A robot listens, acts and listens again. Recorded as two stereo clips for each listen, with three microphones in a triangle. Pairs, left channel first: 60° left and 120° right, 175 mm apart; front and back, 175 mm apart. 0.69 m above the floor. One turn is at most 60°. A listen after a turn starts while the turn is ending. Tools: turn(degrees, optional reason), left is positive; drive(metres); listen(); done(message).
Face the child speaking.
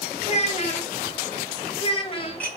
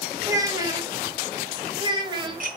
turn(degrees=60, reason="The child speaking: 115° left.")
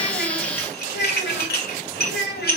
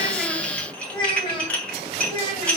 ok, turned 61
turn(degrees=60, reason="The child speaking is now 65° left.")
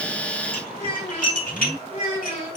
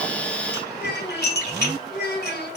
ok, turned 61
done("Facing the child speaking.")